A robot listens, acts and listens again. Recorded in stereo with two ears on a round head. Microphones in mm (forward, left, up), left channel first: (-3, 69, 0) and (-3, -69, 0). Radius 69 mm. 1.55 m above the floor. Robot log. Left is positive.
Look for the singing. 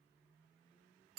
cmd idle
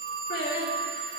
note: The singing: about 65° left or 115° left.
cmd yaw +65
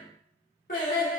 note: So it is at 60° left.
cmd yaw +60
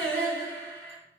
note: The singing is now 15° left.
cmd yaw +15
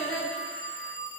end: Found it: singing, straight ahead, 2 to 4 m away.